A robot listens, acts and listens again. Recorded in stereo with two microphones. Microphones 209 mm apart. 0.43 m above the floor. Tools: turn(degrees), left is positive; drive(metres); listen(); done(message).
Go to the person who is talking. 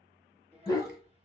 turn(degrees=-30)
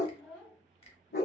drive(metres=1.0)
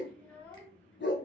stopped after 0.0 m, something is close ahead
done("Something is in my way. I am facing the child speaking but have not reached it.")